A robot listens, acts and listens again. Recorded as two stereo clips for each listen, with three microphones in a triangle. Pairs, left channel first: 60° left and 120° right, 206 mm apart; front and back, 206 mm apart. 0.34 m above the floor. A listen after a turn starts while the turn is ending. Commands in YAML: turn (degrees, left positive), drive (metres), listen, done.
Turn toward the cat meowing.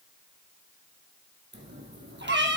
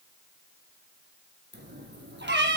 turn: -150
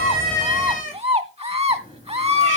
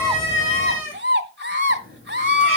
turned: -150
turn: 10
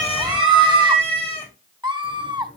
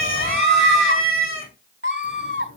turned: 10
done: "Found it: a cat meowing, straight ahead."